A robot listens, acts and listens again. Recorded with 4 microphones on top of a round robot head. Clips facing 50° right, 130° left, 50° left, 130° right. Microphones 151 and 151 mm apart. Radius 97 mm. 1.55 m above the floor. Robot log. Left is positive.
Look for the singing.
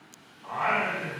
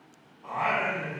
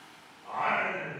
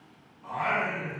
note: The singing: 150° right.
cmd yaw -150
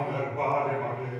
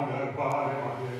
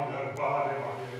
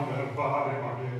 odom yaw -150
note: The singing is now 15° right.
cmd yaw -15
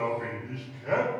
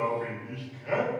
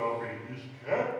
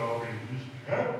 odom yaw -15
end: Found it: singing, straight ahead.